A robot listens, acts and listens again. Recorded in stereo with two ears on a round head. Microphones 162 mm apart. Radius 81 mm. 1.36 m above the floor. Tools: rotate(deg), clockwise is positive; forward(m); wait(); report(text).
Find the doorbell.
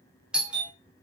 rotate(30)
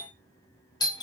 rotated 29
rotate(-25)
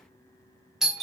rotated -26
report("Facing the doorbell, 1 to 2 m away.")